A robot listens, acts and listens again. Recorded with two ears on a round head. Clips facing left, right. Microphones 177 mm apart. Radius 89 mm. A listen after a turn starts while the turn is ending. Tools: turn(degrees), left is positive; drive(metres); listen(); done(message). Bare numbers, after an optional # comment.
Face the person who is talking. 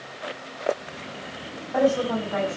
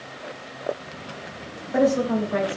# The woman speaking: about 30° right or 150° right.
turn(-30)
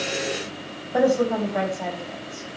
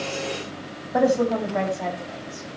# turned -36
done("Found it: a woman speaking, straight ahead.")